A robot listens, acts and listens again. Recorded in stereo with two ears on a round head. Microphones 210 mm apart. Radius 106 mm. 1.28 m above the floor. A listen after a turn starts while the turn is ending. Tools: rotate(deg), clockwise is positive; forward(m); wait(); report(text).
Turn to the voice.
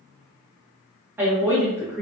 rotate(30)
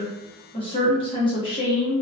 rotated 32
rotate(-20)
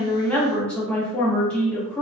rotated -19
report("Found it: a woman speaking, straight ahead, 1 to 2 m away.")